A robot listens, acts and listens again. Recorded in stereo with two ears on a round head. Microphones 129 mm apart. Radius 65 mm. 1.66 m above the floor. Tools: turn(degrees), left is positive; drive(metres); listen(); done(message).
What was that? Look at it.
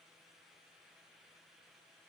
listen()
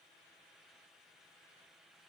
listen()
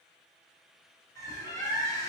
turn(degrees=20)
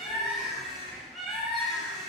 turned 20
done("Facing the bird.")